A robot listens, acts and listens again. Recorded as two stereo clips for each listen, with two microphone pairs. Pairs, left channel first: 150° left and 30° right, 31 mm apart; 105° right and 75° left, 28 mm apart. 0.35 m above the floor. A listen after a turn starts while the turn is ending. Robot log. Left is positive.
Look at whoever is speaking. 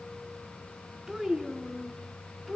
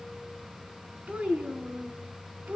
note: The child speaking: 65° left.
cmd yaw +65
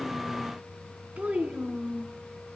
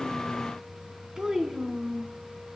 note: The child speaking is now 15° left.
cmd yaw +15
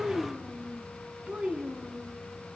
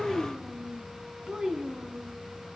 note: The child speaking is now 20° left.
cmd yaw +20
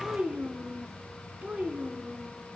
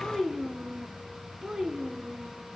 note: The child speaking is now 10° left.
cmd yaw +10
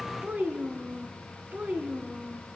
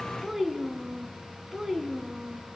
end: Facing the child speaking.